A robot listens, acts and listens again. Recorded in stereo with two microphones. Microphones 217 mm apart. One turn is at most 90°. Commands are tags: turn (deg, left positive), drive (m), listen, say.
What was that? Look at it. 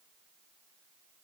<listen/>
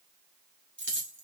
<turn deg="-65"/>
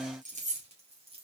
<turn deg="-30"/>
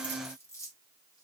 <turn deg="15"/>
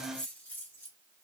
<turn deg="10"/>
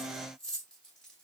<say>Facing the keys jangling, 2 to 4 m away.</say>